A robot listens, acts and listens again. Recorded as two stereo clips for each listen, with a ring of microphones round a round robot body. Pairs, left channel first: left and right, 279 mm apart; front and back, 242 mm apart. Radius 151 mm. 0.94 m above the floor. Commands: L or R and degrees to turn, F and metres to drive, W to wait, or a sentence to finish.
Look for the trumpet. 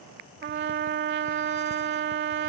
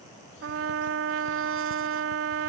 R145
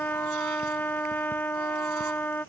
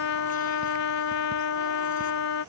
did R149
Facing the trumpet.